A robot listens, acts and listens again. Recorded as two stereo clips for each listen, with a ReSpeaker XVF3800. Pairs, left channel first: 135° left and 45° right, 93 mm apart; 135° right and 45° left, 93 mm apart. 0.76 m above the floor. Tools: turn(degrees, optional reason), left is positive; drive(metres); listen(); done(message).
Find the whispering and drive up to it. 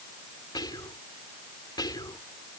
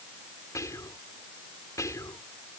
turn(degrees=170, reason="The whispering: 170° left.")
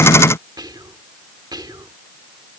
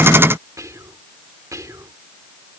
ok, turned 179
turn(degrees=-10, reason="The whispering is now 10° right.")
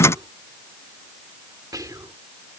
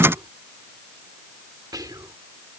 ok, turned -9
drive(metres=1.0)
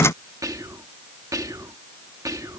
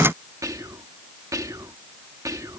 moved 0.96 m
drive(metres=1.0)
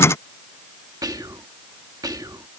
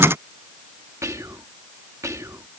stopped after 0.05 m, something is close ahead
done("Arrived at the whispering, straight ahead.")